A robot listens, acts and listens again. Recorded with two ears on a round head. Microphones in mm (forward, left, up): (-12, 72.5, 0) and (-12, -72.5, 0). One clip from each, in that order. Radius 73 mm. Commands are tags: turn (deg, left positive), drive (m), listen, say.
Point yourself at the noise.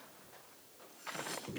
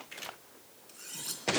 <turn deg="-90"/>
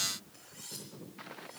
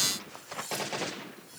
<turn deg="-15"/>
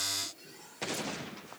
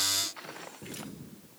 <listen/>
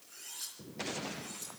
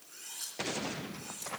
<say>Facing the cutlery clinking.</say>